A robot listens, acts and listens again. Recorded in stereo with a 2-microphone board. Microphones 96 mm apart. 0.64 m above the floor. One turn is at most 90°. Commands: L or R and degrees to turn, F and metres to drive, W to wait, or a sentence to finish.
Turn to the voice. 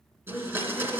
L25
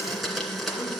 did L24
W
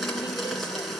W
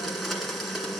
I heard a woman speaking, but can't make it out now. It was about straight ahead or 130° left.